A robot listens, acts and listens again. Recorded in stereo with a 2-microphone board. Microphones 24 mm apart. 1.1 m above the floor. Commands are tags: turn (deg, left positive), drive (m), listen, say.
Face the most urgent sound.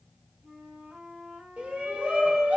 <turn deg="-70"/>
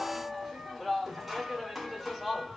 <say>Facing the shout, 1 to 2 m away.</say>